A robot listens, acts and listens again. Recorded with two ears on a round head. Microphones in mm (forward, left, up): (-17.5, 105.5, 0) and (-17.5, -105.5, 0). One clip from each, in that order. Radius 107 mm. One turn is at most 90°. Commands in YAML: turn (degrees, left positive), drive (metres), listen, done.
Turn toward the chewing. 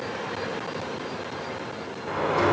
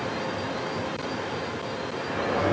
listen: true
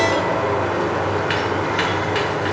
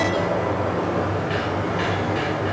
listen: true
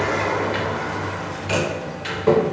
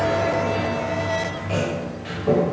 done: "I can't make out chewing to turn to."